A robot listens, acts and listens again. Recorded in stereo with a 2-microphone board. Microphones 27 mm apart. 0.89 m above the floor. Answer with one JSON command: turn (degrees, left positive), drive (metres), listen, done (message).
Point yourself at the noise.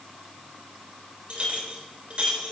{"turn": -40}
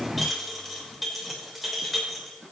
{"done": "Found it: a clink, straight ahead, 2 to 4 m away."}